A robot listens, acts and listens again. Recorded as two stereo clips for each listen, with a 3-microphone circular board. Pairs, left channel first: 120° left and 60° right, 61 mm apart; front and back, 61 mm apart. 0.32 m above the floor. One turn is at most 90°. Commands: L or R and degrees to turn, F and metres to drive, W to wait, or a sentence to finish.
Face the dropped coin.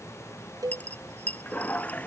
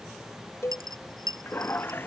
R90
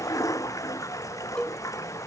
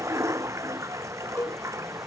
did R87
R90
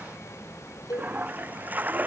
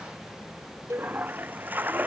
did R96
L10
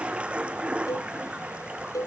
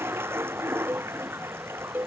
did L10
Facing where the dropped coin came from. I can't hear it now.